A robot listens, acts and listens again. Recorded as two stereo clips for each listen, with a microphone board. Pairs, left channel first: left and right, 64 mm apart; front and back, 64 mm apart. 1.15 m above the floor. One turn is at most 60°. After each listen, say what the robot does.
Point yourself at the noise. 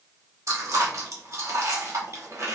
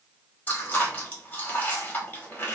Turn 55° right.
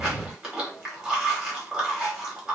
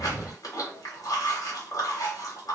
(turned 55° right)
Turn 15° right.
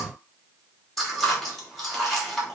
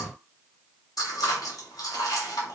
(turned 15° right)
Facing the chewing.